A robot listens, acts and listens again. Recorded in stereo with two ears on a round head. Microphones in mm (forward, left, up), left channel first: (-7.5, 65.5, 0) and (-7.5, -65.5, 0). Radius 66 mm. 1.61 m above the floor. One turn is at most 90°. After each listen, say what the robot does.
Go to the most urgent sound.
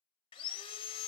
Keep listening.
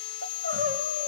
Turn 70° right.
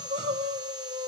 Turn 35° right.
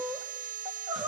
Drive 1.0 m forward.
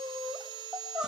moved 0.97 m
Drive 1.0 m forward.
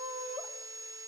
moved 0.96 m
Drive 1.0 m forward.
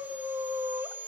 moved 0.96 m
Turn 20° right.
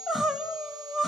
Drive 1.0 m forward.
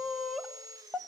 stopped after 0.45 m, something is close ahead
Arrived at the crying, straight ahead.